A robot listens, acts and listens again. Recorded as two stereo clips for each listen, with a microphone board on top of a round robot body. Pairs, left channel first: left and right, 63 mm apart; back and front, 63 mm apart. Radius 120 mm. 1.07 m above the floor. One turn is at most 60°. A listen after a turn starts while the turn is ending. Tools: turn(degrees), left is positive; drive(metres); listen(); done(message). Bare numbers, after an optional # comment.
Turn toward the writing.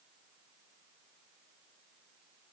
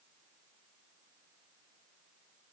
listen()
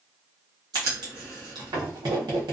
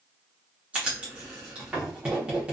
# The writing: 70° right.
turn(-60)
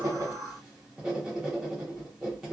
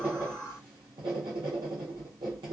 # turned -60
done("Facing the writing.")